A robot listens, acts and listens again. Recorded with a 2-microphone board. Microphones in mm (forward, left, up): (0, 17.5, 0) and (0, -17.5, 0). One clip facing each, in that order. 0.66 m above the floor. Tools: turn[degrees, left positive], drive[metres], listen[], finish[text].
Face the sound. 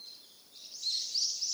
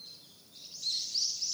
Action: listen[]
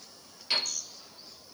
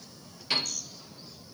Action: turn[-30]
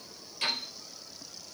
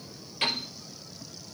Thought: So it is at 145° right.
Action: turn[-145]
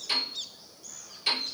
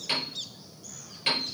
Thought: The piano is now 35° right.
Action: turn[-35]
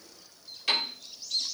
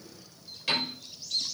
Action: finish[Facing the piano, over 4 m away.]